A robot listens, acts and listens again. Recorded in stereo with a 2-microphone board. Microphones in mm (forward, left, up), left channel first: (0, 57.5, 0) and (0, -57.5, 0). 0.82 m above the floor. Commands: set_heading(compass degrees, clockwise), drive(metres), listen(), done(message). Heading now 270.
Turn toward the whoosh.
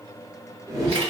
set_heading(295)
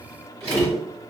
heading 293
done("Facing the whoosh, under 1 m away.")